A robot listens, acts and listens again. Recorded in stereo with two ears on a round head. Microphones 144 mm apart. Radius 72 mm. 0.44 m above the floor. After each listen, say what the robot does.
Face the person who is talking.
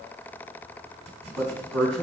Turn 30° left.
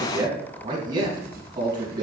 Turn 25° right.
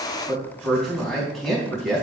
Facing the man speaking, 2 to 4 m away.